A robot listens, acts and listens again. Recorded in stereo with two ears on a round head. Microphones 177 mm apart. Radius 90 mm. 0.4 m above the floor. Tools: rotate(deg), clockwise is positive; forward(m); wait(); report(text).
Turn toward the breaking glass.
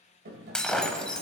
rotate(-30)
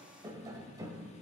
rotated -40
wait()
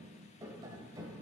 report("I heard breaking glass, but can't make it out now. It was about 35° right or 135° left.")